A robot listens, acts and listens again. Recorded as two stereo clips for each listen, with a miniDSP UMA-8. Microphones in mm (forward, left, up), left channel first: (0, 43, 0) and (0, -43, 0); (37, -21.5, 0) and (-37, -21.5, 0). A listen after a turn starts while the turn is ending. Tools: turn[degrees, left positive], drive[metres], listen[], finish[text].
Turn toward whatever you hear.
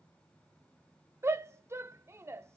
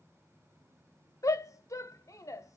Thought: The shout: 35° right.
Action: turn[-35]
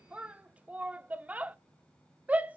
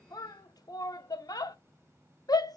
Thought: The shout is now 20° right.
Action: turn[-20]
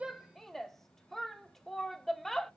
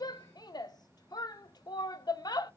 Action: finish[Found it: a shout, straight ahead.]